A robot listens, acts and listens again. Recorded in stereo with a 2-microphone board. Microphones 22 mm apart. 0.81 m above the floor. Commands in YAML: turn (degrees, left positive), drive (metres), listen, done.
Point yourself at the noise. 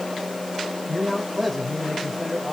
turn: 30
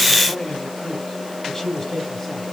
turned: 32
turn: 150
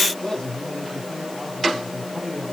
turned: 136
turn: 25
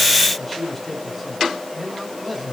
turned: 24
done: "Facing the man speaking."